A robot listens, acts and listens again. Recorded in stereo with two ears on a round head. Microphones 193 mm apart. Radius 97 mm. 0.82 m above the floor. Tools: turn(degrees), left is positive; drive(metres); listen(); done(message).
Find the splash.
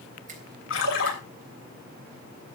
turn(degrees=70)
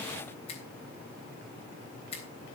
listen()
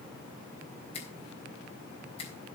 done("I heard a splash, but can't make it out now. It was about straight ahead or 40° left.")